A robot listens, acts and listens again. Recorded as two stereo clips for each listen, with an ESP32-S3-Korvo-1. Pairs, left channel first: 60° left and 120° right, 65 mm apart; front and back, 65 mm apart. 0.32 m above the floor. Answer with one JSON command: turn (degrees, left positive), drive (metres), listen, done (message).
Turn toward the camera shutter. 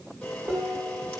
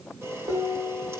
{"turn": 135}
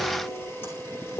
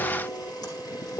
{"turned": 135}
{"done": "Facing the camera shutter, over 4 m away."}